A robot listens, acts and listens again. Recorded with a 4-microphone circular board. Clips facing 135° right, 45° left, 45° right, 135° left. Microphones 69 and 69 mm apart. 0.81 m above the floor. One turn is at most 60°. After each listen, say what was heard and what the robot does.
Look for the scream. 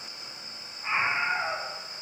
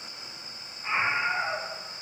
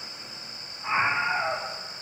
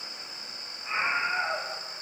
The scream: 50° right. Turn 50° right.
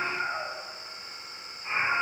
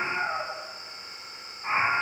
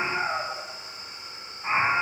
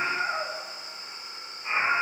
Facing the scream.